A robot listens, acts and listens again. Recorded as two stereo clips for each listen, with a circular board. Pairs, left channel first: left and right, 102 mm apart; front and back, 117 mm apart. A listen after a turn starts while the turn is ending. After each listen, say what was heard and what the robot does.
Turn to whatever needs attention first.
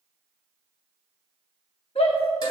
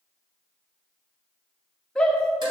The shout: 85° left. Turn 85° left.
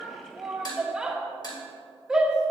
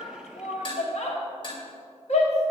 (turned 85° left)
Found it: a shout, straight ahead, 1 to 2 m away.